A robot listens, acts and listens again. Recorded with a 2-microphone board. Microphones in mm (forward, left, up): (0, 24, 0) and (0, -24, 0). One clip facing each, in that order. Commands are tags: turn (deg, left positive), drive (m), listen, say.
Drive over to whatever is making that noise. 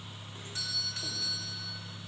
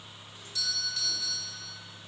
<turn deg="30"/>
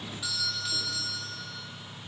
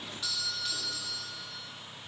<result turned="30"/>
<drive m="1.0"/>
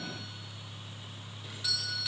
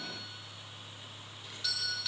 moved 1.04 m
<drive m="1.0"/>
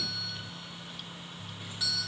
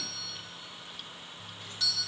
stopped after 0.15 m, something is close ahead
<turn deg="10"/>
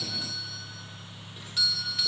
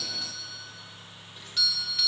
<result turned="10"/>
<say>I am next to the doorbell.</say>